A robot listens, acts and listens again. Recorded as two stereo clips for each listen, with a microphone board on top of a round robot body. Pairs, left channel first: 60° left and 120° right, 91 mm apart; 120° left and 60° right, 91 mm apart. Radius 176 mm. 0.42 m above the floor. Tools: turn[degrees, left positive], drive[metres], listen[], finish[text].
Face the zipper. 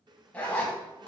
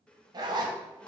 Thought: The zipper: 15° right.
Action: turn[-15]
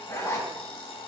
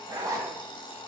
Action: finish[Facing the zipper, 1 to 2 m away.]